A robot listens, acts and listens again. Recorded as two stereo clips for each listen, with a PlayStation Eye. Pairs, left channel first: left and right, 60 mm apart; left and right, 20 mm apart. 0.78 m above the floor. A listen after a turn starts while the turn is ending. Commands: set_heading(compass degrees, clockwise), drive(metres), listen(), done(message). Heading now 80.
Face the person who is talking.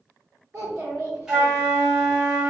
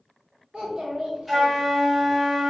set_heading(145)
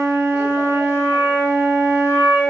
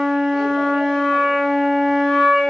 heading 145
listen()
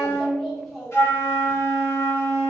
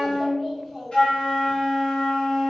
done("Facing the child speaking, 1 to 2 m away.")